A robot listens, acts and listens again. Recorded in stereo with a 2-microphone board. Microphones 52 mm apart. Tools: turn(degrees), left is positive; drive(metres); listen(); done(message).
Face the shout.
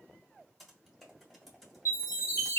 listen()
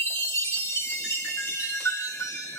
listen()
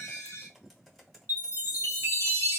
done("I can't make out a shout to turn to.")